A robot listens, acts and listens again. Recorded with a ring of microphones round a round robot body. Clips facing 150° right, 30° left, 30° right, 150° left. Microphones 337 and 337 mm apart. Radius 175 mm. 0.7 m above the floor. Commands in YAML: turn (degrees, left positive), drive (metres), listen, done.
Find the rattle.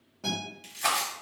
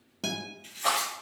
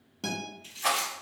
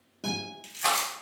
turn: 180
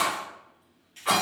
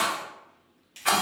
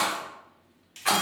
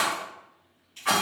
turn: 10
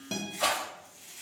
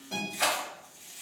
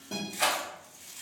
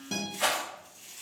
done: "Facing the rattle, 1 to 2 m away."